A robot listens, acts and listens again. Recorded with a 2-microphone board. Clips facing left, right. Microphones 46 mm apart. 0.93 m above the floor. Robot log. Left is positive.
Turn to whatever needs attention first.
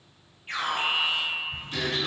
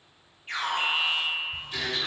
note: The alarm: about 15° left or 165° left.
cmd yaw +15
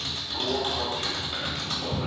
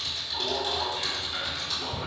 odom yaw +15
end: Found it: an alarm, straight ahead, 1 to 2 m away.